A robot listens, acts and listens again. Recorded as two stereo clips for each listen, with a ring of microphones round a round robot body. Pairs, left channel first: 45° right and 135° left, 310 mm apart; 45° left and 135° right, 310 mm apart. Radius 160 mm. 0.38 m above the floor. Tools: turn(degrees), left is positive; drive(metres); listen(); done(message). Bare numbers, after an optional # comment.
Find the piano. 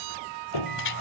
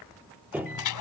# The piano: 50° right.
turn(-50)
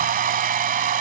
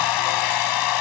listen()
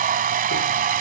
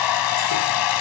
listen()
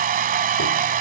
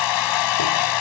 done("Facing where the piano came from. I can't hear it now.")